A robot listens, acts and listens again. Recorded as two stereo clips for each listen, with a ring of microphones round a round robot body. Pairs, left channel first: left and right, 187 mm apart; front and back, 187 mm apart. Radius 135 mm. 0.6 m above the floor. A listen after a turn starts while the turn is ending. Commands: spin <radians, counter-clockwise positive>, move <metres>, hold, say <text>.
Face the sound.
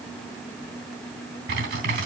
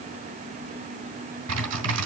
spin -2.53
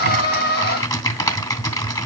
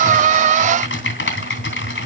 spin 0.35
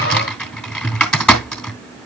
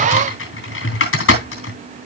say Facing the typing on a keyboard, 2 to 4 m away.